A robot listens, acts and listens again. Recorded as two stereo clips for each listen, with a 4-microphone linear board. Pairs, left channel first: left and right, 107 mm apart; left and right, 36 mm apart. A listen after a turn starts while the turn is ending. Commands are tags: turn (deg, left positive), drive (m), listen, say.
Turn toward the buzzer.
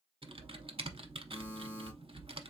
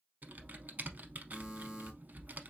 <turn deg="-20"/>
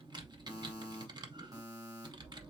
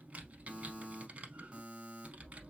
<turn deg="-145"/>
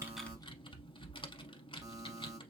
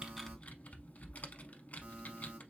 <turn deg="-40"/>
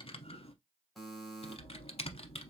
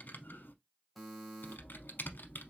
<say>Facing the buzzer, 1 to 2 m away.</say>